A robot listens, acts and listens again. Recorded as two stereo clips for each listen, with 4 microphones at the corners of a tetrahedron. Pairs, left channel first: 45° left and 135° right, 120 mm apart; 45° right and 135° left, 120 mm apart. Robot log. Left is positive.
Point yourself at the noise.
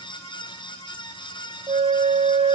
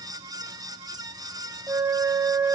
note: The flute: 160° right.
cmd yaw -160
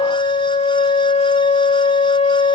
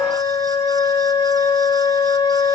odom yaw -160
note: The flute is now 10° left.
cmd yaw +10
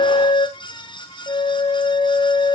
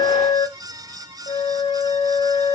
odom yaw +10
end: Found it: a flute, straight ahead, under 1 m away.